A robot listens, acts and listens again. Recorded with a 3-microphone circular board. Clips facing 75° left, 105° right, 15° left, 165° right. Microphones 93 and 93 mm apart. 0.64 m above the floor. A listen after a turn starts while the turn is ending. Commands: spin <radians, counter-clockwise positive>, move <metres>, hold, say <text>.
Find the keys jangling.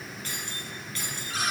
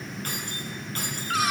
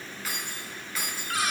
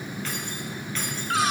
spin -1.13
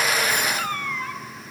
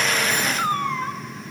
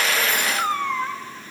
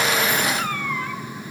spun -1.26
hold
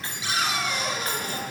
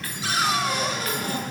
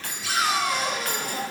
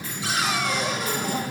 spin 0.17
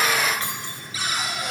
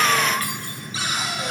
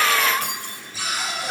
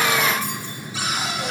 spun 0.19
hold
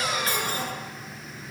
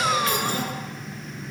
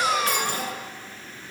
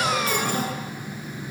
hold
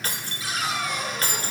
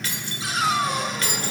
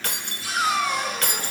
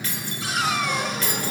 spin 0.52
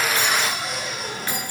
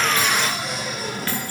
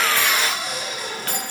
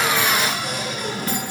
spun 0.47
hold
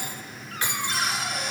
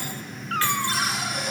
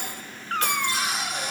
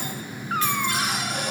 hold
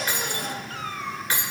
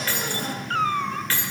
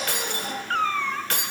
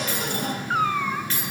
say Facing the keys jangling.